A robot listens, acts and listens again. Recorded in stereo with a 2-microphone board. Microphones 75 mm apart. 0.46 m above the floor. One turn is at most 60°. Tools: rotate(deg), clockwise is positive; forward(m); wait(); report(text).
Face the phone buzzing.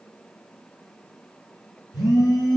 rotate(-55)
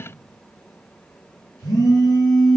rotate(-60)
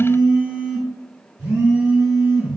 rotate(25)
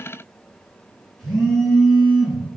report("Facing the phone buzzing.")